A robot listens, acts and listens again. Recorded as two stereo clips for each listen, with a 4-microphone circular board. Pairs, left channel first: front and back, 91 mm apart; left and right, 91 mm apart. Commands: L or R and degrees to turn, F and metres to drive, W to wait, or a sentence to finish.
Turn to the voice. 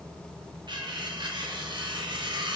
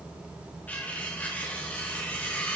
W
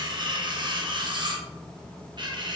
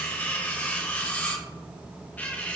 W
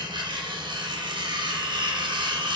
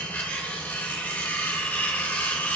I can't make out anyone speaking, only cutlery clinking.